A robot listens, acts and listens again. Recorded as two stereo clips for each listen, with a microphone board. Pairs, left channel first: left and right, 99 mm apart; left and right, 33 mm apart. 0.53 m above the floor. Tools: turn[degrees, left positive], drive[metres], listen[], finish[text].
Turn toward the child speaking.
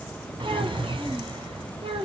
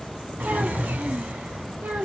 Action: turn[-90]
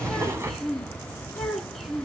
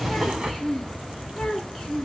Action: finish[Found it: a child speaking, straight ahead, 2 to 4 m away.]